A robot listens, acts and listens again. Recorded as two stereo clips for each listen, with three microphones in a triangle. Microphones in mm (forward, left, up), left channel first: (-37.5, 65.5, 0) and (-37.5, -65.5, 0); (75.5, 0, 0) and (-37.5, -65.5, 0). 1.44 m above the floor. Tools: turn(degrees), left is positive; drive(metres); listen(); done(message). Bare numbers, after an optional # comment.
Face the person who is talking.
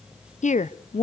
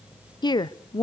# The woman speaking: 85° left.
turn(85)
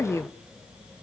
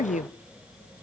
# The woman speaking is now 25° left.
turn(25)
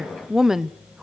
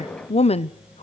done("Found it: a woman speaking, straight ahead.")